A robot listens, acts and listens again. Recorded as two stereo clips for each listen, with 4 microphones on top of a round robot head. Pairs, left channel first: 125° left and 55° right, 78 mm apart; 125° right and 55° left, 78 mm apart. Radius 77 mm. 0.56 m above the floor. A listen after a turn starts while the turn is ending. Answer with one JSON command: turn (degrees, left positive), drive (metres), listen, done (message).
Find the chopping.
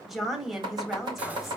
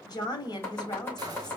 {"turn": -65}
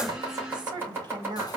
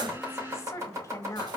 {"done": "Facing the chopping."}